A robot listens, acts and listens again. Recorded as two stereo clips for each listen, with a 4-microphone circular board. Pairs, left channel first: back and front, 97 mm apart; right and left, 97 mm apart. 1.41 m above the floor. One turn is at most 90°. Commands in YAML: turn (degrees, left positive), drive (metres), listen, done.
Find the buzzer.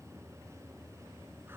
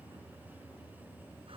listen: true
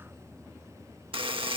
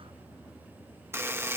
turn: 25
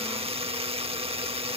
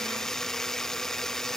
done: "Facing the buzzer."